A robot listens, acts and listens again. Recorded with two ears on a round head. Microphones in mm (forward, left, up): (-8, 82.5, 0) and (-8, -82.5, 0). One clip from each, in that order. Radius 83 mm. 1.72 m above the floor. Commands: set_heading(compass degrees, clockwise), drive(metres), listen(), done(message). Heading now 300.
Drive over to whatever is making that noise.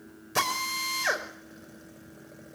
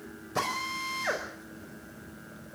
set_heading(240)
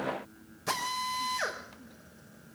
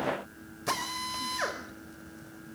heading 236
drive(1.0)
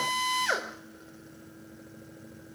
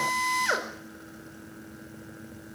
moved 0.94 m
drive(1.0)
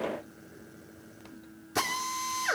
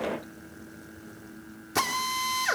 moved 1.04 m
set_heading(246)
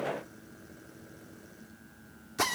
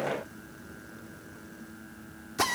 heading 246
drive(1.0)
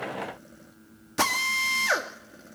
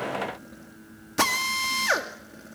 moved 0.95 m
drive(1.0)
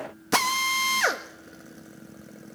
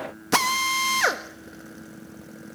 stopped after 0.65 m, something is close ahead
done("Arrived at the drill, straight ahead.")